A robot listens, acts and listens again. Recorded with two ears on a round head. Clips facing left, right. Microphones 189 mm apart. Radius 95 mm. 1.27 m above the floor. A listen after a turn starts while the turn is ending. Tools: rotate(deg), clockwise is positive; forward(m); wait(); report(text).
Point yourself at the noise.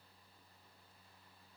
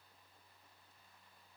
wait()
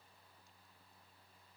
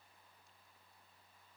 wait()
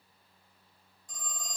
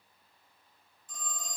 rotate(-35)
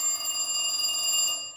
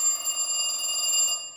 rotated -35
report("Found it: a phone ringing, straight ahead, 1 to 2 m away.")